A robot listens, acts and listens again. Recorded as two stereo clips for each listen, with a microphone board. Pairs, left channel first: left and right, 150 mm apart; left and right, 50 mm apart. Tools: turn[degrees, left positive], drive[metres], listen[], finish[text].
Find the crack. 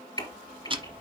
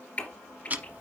Thought: The crack: about 25° left or 155° left.
Action: turn[25]
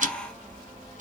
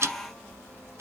Action: listen[]
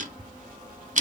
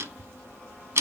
Action: finish[I heard a crack, but can't make it out now. It was about straight ahead or 130° left.]